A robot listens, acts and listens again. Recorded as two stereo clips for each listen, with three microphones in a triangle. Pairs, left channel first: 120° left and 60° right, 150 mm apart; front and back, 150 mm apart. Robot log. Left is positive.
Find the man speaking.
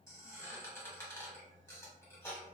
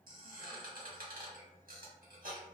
cmd idle
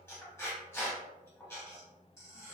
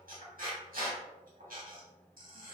cmd idle
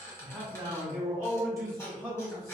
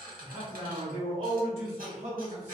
note: The man speaking: 135° right.
cmd yaw -135
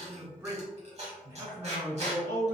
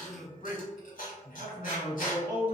note: The man speaking is now 15° left.
cmd yaw +15
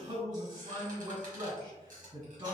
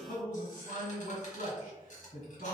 end: Facing the man speaking, 2 to 4 m away.